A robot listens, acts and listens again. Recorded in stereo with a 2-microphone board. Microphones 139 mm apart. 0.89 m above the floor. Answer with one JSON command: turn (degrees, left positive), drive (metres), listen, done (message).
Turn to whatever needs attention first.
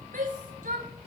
{"turn": -90}
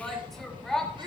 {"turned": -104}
{"done": "Facing the shout."}